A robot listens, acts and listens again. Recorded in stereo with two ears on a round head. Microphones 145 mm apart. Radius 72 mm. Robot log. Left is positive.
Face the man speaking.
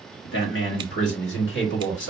cmd yaw +90
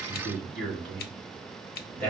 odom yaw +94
end: Found it: a man speaking, straight ahead, 2 to 4 m away.